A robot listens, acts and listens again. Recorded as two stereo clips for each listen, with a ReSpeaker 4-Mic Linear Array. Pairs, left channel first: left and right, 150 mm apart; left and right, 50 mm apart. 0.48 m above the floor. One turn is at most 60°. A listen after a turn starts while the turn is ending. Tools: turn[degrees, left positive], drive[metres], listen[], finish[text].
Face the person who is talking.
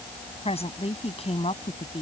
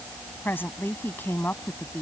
Thought: The woman speaking: about 45° left or 135° left.
Action: turn[45]
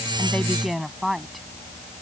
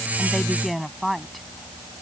Action: finish[Found it: a woman speaking, straight ahead.]